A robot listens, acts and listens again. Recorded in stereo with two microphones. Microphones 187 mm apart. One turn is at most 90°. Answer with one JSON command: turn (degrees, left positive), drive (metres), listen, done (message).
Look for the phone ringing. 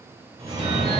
{"turn": -30}
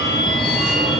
{"done": "Found it: a phone ringing, straight ahead, 1 to 2 m away."}